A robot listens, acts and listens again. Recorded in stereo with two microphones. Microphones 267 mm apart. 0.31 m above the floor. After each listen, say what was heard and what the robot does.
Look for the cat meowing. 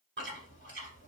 Keep listening.
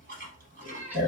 Turn 30° right.
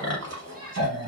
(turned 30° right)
Keep listening.
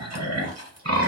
Keep listening.
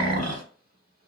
I heard a cat meowing, but can't make it out now. It was about 20° left or 140° right.